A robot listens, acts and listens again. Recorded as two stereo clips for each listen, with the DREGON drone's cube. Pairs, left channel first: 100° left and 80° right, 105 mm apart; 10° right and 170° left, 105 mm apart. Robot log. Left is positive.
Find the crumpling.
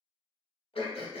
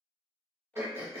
cmd idle
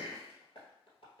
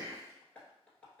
cmd idle
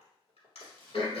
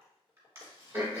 note: The crumpling: 30° left.
cmd yaw +30
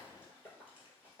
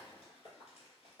end: Facing the crumpling, 1 to 2 m away.